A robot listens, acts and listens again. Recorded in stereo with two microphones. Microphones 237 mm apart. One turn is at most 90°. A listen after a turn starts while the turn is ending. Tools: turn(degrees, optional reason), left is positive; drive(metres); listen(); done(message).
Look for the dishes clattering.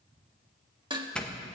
turn(degrees=-20, reason="The dishes clattering: about 20° right or 160° right.")
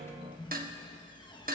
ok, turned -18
turn(degrees=-90, reason="So it is at 140° right.")
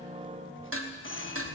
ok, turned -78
turn(degrees=-65, reason="The dishes clattering is now 65° right.")
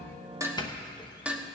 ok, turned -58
done("Facing the dishes clattering.")